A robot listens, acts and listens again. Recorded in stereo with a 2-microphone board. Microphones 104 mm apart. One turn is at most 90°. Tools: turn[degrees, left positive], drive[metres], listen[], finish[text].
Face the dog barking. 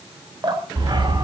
Thought: The dog barking: about 45° right or 135° right.
Action: turn[-45]
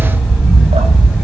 Action: finish[Facing the dog barking.]